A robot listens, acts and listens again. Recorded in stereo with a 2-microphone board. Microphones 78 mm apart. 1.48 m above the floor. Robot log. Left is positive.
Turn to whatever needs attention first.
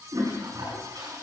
cmd idle
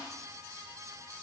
cmd idle
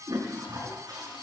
end: I can't make out anything urgent to turn to.